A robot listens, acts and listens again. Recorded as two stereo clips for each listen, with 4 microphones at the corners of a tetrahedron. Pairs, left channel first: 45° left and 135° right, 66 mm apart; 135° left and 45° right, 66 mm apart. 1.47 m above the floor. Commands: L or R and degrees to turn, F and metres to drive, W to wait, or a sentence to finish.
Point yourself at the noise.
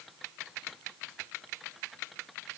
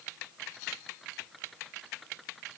W
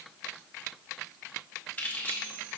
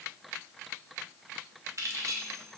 R20
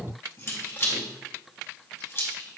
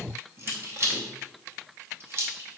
Found it: keys jangling, straight ahead, under 1 m away.